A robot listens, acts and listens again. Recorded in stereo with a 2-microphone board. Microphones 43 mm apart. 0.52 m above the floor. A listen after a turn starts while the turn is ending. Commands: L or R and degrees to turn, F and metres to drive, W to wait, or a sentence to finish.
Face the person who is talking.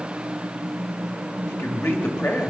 L60
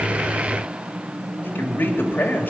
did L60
L50
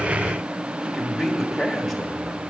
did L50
Found it: a man speaking, straight ahead.